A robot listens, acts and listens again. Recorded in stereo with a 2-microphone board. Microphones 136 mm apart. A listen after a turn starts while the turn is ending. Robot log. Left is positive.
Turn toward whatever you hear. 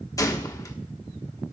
note: The gunshot: about 25° left or 155° left.
cmd yaw +25
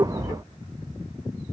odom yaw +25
cmd idle
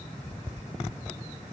end: I heard a gunshot, but can't make it out now. It was about straight ahead or 130° left.